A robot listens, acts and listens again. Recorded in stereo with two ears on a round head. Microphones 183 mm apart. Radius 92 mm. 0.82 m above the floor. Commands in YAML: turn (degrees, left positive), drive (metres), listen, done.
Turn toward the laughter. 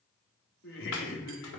turn: 65
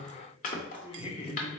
turn: 30
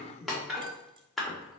done: "Found it: laughter, straight ahead, 1 to 2 m away."